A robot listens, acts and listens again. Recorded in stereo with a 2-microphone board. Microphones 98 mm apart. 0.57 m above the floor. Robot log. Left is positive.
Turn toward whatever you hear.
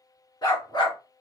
note: The dog barking: about 45° left or 135° left.
cmd yaw +45
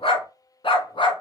note: So it is at 60° left.
cmd yaw +60
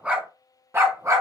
note: The dog barking is now 35° right.
cmd yaw -35
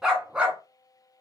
note: The dog barking is now 10° right.
cmd yaw -10
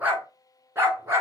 note: The dog barking is now 25° right.
cmd yaw -25
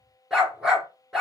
end: Found it: a dog barking, straight ahead.